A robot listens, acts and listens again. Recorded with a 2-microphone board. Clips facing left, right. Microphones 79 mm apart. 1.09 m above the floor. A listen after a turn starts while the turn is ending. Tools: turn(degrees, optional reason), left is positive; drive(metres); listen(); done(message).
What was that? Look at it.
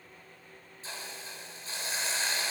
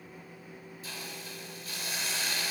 turn(degrees=30, reason="The hiss: about 30° left or 150° left.")
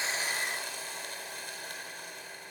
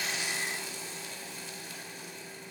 turn(degrees=120, reason="So it is at 120° left.")
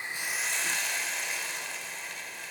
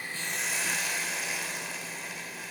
done("Facing the hiss.")